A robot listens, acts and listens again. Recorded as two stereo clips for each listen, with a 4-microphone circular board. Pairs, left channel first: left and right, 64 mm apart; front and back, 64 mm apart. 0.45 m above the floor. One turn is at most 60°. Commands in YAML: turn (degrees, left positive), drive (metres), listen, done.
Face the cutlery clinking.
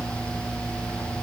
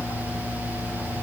listen: true
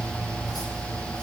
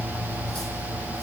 listen: true
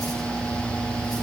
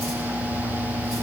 done: "I can't make out cutlery clinking to turn to."